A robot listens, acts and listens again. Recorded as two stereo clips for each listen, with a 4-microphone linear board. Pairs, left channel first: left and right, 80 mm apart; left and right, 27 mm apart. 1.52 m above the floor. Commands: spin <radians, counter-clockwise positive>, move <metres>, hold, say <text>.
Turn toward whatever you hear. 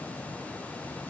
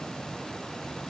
hold
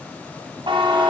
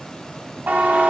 spin -1.57
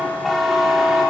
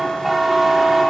say Found it: a buzzer, straight ahead.